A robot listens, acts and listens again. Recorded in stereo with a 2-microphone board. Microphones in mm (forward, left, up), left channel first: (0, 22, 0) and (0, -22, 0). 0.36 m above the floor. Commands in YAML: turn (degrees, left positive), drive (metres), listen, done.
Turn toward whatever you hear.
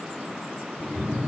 turn: 30
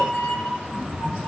turn: 130
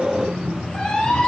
turn: 15
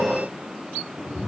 turn: 10
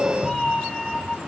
done: "Facing the cat meowing."